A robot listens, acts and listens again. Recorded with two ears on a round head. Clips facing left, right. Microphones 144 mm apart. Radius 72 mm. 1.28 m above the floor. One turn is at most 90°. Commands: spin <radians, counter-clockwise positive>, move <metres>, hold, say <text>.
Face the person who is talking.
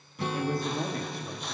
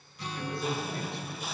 spin 0.70
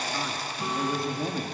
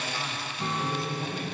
spin 1.57
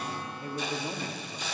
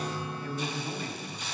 spin 0.35
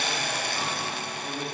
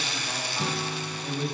say Found it: a man speaking, straight ahead, 2 to 4 m away.